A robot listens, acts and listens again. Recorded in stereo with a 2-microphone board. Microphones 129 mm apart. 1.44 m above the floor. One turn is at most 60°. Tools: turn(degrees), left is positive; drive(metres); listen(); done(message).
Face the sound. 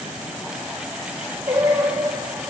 turn(degrees=-20)
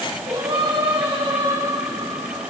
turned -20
turn(degrees=-35)
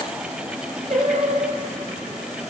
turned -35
turn(degrees=-60)
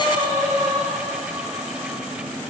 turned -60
turn(degrees=-50)
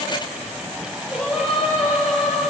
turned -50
done("Found it: singing, straight ahead, over 4 m away.")